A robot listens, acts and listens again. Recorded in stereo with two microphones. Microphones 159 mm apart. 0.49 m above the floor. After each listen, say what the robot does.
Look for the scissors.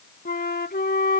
Keep listening.
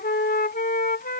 Keep listening.
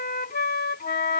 I can't make out scissors to turn to.